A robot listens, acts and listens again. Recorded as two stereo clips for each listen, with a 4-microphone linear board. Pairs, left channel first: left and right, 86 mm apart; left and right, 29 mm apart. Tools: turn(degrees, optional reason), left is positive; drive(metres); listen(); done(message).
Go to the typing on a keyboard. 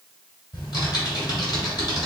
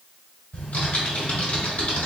turn(degrees=55, reason="The typing on a keyboard: about 55° left or 125° left.")
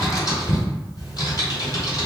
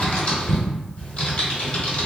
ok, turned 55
turn(degrees=55, reason="So it is at 55° left.")
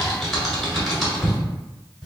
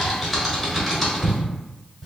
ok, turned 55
drive(metres=1.0)
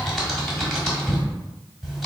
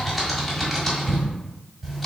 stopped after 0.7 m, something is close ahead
done("I am next to the typing on a keyboard.")